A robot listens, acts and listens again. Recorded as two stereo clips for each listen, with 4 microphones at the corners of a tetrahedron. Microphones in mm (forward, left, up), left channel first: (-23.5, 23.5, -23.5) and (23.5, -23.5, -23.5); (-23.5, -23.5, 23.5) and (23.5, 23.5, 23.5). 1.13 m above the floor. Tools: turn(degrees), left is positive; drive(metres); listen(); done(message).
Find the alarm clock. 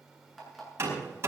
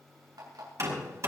turn(degrees=45)
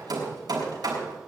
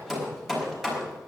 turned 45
listen()
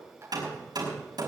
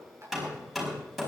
listen()
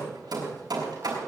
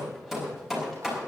done("I heard an alarm clock from this way, but can't make it out now.")